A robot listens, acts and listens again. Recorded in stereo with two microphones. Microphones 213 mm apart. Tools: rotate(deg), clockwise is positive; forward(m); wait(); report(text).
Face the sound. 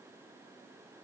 wait()
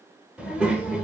rotate(30)
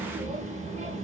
rotate(145)
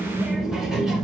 report("Found it: a child speaking, straight ahead.")